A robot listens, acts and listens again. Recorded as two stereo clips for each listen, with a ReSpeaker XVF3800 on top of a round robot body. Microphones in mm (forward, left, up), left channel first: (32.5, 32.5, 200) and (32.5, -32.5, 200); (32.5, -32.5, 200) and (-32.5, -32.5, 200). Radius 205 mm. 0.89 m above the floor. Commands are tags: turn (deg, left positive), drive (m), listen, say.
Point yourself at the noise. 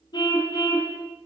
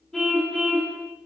<turn deg="85"/>
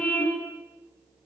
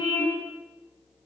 <turn deg="15"/>
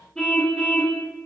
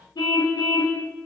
<say>Facing the car horn.</say>